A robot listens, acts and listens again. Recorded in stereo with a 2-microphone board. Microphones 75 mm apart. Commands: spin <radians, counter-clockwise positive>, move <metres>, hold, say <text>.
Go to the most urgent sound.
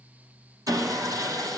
hold
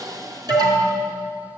spin -1.05
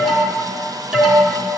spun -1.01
move 1.0
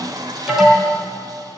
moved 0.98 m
move 1.0
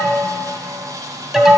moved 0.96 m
move 1.0
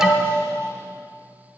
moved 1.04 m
spin -0.17
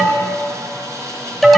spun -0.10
move 1.0
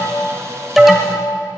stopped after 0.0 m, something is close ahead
say I am next to the alarm.